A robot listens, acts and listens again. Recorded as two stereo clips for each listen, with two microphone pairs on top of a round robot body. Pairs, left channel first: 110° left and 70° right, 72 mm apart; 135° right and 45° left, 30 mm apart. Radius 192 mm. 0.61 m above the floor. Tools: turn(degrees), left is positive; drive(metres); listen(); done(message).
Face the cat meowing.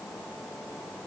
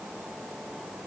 listen()
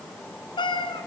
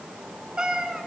turn(degrees=110)
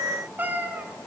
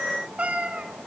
done("Found it: a cat meowing, straight ahead.")